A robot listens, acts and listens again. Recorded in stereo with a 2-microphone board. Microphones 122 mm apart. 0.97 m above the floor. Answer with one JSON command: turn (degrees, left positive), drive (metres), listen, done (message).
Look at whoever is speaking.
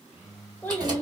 {"turn": 30}
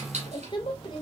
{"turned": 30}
{"turn": 140}
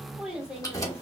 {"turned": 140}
{"done": "Found it: a child speaking, straight ahead, 1 to 2 m away."}